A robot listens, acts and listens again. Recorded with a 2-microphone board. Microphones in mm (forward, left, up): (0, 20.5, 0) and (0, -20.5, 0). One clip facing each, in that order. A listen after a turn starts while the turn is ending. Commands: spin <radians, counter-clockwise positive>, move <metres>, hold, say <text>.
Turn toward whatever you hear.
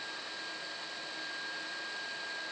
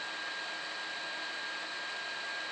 hold
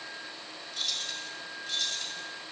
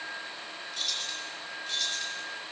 spin 0.52
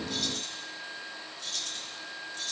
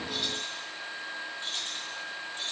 spin -0.61
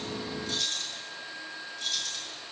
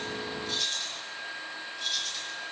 say Found it: keys jangling, straight ahead, over 4 m away.